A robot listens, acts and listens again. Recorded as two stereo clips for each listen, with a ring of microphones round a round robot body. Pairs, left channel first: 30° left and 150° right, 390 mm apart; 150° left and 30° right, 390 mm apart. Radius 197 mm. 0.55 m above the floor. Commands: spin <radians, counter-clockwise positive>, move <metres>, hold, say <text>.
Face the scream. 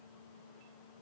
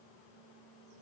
hold
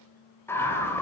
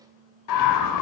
spin 2.01
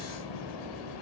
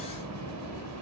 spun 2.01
spin 0.26
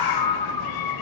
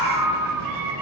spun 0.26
say Found it: a scream, straight ahead.